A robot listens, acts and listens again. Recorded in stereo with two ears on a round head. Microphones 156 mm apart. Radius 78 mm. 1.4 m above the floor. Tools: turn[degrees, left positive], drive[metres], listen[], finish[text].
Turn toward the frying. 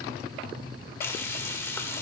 Thought: The frying: about 15° left or 165° left.
Action: turn[15]
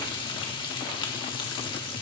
Thought: So it is at 150° left.
Action: turn[150]
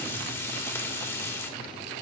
Thought: The frying is now 15° left.
Action: turn[15]
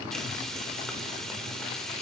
Action: finish[Facing the frying.]